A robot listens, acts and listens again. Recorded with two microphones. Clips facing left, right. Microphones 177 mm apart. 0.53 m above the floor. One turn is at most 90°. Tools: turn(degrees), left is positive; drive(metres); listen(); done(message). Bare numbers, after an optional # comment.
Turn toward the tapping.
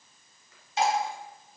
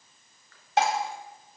listen()
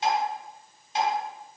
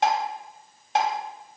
listen()
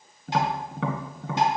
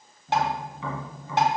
# The tapping: about 75° left or 105° left.
turn(75)
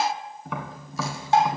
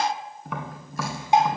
done("Facing the tapping.")